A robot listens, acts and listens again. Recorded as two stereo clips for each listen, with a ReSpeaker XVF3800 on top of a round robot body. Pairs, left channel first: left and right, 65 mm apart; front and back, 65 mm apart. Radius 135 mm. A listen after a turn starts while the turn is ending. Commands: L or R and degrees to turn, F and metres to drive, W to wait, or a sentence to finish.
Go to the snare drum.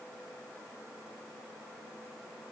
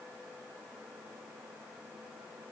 W
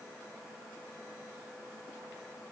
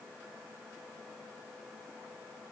W
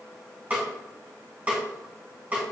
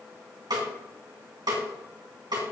R160
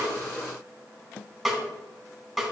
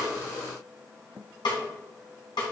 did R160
F1.0
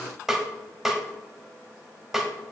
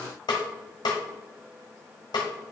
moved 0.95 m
F1.0
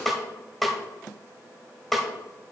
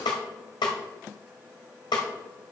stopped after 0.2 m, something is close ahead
I am next to the snare drum.